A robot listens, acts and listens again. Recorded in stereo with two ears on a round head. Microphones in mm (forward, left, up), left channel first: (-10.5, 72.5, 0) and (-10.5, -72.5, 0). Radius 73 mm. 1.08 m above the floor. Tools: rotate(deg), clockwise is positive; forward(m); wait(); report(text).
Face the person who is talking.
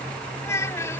rotate(-15)
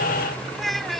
report("Found it: a child speaking, straight ahead.")